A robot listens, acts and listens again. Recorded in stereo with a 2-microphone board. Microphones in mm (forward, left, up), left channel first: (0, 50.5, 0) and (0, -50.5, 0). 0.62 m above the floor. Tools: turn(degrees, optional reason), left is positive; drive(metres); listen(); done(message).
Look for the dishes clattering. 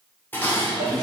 turn(degrees=20, reason="The dishes clattering: about 20° left or 160° left.")
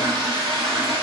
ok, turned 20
listen()
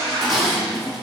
done("Facing the dishes clattering.")